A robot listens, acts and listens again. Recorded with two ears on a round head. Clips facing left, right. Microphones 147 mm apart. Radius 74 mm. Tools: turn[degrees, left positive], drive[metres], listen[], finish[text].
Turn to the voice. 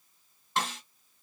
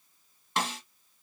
Action: listen[]
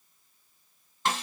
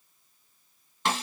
Action: listen[]
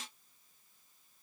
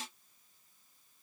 Action: finish[I can't make out anyone speaking to turn to.]